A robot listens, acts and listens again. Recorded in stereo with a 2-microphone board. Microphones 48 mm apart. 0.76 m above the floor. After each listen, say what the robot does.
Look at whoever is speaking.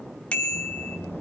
Turn 70° left.
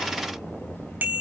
Turn 40° left.
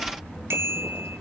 Turn 15° left.
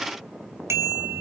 Keep listening.
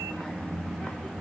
Facing the child speaking.